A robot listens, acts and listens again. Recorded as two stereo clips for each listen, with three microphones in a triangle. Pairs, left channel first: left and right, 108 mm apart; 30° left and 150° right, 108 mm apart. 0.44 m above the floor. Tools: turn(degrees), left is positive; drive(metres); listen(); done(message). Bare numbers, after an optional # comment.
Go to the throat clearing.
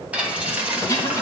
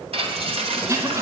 # The throat clearing: 150° left.
turn(150)
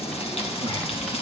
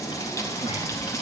listen()
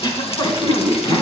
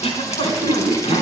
# The throat clearing is now 45° left.
turn(45)
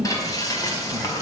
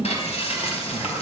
# The throat clearing is now 10° right.
turn(-10)
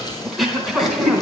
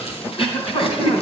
drive(1.0)
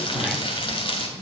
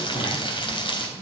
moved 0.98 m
drive(1.0)
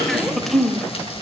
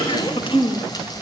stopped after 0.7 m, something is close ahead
done("I am next to the throat clearing.")